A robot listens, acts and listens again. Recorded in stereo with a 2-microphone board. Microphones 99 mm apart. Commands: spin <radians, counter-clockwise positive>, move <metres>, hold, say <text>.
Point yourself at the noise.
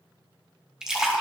spin -0.52
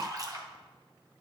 spin -2.44
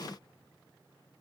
say I heard a splash from this way, but can't make it out now.